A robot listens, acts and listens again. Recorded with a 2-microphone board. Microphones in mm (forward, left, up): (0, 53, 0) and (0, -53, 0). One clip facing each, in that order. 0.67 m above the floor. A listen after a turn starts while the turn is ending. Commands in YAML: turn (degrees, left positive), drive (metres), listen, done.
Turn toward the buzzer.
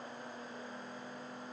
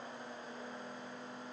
listen: true
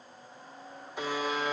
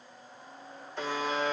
turn: 30
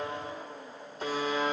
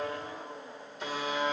turn: 140
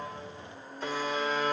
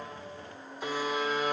turn: -15
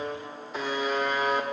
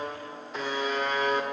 done: "Found it: a buzzer, straight ahead."